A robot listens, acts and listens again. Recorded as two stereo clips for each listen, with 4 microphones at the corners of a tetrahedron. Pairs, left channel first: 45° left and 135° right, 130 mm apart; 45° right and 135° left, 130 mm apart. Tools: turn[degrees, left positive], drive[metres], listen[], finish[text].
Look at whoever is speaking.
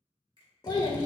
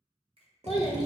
Action: finish[Found it: a child speaking, straight ahead.]